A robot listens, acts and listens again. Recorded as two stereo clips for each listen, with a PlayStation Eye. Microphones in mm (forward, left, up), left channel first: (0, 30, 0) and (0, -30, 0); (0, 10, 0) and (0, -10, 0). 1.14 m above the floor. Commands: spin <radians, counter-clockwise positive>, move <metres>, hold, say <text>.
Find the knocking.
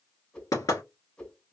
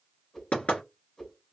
spin 1.57
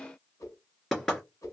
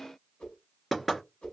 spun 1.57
spin 0.17
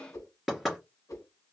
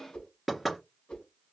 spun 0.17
say Facing the knocking, 2 to 4 m away.